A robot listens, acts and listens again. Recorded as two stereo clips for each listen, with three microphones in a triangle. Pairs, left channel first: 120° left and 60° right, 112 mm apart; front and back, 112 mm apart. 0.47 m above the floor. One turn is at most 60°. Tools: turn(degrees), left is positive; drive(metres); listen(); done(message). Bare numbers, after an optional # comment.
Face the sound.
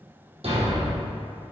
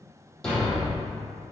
# The thud: 85° right.
turn(-60)
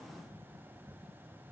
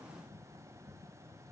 # Nothing new. It was at 25° right.
turn(-25)
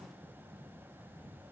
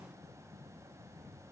done("I heard a thud from this way, but can't make it out now.")